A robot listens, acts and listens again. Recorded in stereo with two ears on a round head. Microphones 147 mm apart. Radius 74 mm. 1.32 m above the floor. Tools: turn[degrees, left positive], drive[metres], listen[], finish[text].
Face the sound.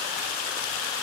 Action: listen[]
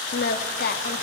Thought: The singing: about 60° left or 120° left.
Action: turn[60]
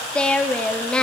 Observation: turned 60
Action: finish[Found it: singing, straight ahead.]